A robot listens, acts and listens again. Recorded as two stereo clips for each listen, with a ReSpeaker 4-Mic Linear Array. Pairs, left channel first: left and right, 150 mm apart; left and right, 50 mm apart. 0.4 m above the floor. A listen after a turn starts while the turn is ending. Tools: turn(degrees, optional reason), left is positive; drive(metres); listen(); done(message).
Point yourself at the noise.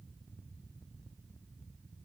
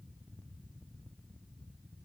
listen()
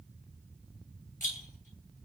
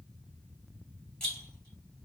turn(degrees=20, reason="The rattle: about 20° left or 160° left.")
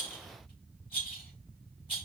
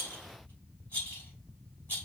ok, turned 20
turn(degrees=140, reason="So it is at 140° left.")
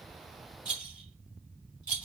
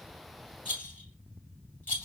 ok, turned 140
turn(degrees=35, reason="The rattle is now 35° left.")
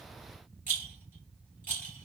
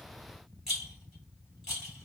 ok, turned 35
turn(degrees=-10, reason="The rattle is now 10° right.")
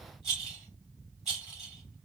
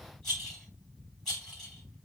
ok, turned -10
done("Facing the rattle, 2 to 4 m away.")